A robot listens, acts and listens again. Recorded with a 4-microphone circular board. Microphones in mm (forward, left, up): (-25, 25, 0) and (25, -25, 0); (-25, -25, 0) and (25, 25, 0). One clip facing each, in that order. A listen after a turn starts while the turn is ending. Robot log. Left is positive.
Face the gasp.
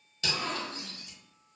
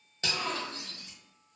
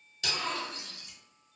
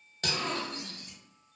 note: The gasp: 105° left.
cmd yaw +105
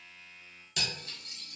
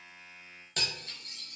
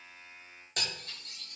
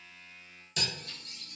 end: I heard a gasp from this way, but can't make it out now.